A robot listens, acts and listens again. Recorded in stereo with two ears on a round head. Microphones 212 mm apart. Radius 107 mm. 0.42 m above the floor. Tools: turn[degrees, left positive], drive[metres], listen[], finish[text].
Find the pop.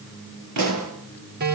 Action: turn[-90]
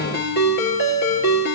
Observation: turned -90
Action: finish[Facing where the pop came from. I can't hear it now.]